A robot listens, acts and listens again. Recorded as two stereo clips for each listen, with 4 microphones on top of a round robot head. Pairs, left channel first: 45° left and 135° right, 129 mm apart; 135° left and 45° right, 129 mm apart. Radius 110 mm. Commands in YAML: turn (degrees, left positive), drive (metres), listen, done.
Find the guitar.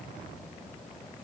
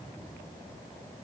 listen: true
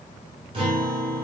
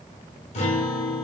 turn: 175
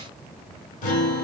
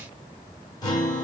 turn: 75
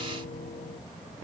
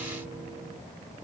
listen: true
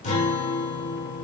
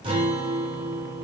done: "Found it: a guitar, straight ahead."